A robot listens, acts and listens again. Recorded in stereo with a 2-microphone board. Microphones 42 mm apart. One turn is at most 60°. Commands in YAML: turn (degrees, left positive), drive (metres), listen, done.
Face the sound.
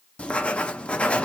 turn: 30
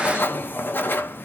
turn: 60
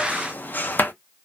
turn: 50
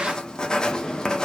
turn: 15
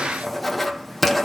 done: "Found it: writing, straight ahead, under 1 m away."